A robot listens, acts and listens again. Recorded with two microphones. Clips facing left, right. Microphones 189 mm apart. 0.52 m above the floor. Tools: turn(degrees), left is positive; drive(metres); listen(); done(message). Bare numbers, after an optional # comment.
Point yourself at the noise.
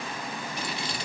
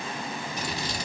# The scissors: about 45° right or 135° right.
turn(-45)
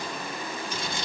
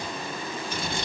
# So it is at 80° right.
turn(-80)
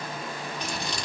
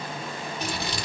done("Found it: scissors, straight ahead, 1 to 2 m away.")